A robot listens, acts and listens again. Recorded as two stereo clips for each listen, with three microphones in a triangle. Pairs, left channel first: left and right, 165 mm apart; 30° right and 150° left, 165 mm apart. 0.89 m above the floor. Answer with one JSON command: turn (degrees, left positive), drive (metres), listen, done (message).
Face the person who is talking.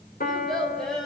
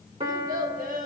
{"turn": 180}
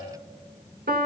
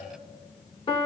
{"listen": true}
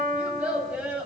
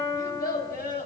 {"turn": -10}
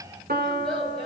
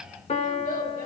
{"done": "Facing the child speaking, 2 to 4 m away."}